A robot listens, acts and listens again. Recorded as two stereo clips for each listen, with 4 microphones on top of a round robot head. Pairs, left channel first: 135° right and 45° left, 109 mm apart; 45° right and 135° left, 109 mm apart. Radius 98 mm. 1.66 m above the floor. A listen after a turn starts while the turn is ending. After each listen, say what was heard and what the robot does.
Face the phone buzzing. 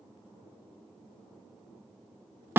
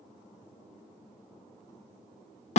Keep listening.
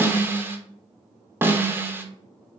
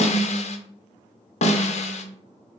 Keep listening.
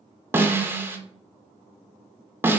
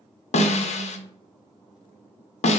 I can't make out a phone buzzing to turn to.